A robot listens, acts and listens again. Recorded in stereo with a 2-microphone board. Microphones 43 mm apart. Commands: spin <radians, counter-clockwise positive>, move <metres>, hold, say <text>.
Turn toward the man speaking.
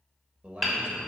spin -0.44
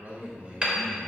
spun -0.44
spin -0.52
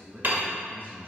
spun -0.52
spin -2.27
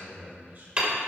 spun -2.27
spin -0.70
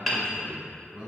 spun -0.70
spin -0.26
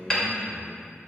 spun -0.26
say Facing the man speaking.